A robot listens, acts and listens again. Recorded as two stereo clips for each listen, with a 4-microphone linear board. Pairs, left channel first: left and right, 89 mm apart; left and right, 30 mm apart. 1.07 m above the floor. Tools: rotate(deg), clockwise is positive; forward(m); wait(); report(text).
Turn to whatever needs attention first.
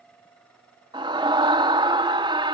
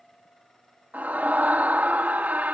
rotate(70)
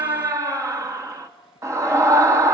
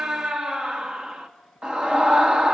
rotate(35)
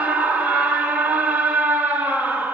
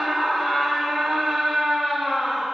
rotate(15)
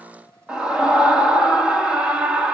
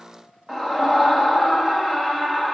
rotate(10)
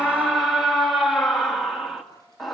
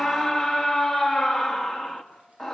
report("Facing the scream, 2 to 4 m away.")